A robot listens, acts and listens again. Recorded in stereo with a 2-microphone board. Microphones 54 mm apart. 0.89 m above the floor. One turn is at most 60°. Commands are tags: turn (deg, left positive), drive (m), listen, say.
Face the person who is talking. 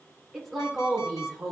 <turn deg="30"/>
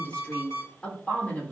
<turn deg="60"/>
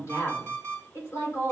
<turn deg="60"/>
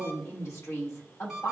<turn deg="60"/>
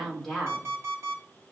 <say>Found it: a woman speaking, straight ahead.</say>